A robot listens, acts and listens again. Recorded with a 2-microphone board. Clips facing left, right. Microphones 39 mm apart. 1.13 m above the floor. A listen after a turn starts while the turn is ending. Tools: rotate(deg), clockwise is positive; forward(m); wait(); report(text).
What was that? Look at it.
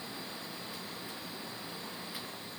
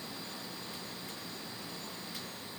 wait()
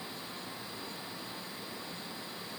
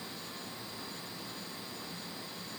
wait()
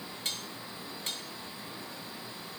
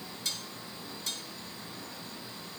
rotate(-40)
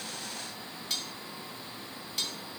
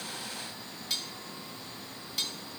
report("Facing the cutlery clinking, 2 to 4 m away.")